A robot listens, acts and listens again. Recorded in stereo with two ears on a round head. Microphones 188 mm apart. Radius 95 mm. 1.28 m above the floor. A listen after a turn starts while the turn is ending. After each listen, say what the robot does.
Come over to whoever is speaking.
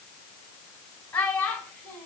Turn 30° left.
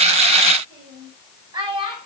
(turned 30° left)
Turn 25° right.
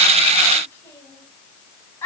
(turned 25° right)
Turn 10° left.
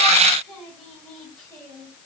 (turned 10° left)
Drive 1.0 m forward.
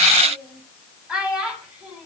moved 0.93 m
Drive 1.0 m forward.
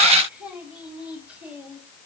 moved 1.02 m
Drive 1.0 m forward.
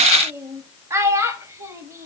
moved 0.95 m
Turn 15° right.
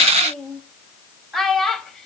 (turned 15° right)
Drive 1.0 m forward.
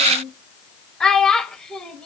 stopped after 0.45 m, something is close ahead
Arrived at the child speaking, straight ahead.